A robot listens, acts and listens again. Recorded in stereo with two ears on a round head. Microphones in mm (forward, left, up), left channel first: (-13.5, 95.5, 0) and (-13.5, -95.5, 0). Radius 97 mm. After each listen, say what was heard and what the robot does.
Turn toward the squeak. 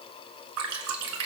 Keep listening.
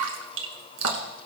Keep listening.
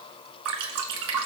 I can't make out a squeak to turn to.